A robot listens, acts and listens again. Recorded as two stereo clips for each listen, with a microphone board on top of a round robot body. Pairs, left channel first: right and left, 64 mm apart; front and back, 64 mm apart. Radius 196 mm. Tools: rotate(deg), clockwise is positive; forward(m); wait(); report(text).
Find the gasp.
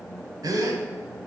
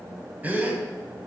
rotate(-115)
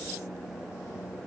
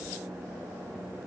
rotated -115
report("Facing where the gasp came from. I can't hear it now.")